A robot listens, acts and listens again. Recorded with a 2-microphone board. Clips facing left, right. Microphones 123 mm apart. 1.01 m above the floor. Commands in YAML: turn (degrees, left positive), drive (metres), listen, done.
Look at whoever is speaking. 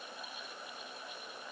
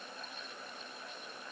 listen: true
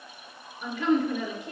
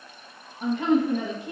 turn: -50
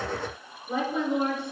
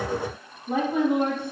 turn: -70
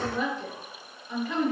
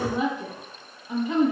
turn: -20
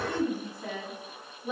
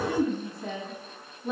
done: "Found it: a woman speaking, straight ahead."